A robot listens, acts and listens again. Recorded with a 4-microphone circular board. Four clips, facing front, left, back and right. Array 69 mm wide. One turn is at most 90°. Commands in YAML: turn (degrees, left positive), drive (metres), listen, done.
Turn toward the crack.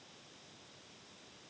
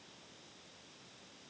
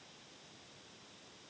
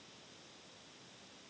listen: true
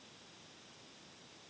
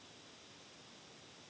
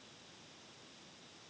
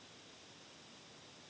listen: true
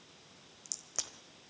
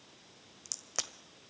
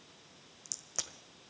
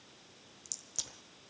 turn: 90
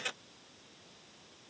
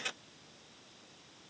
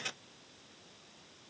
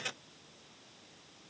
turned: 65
turn: 25
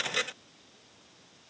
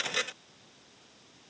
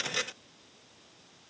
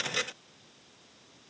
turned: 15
turn: 10
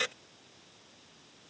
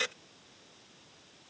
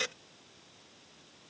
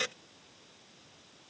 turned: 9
done: "Facing where the crack came from. I can't hear it now."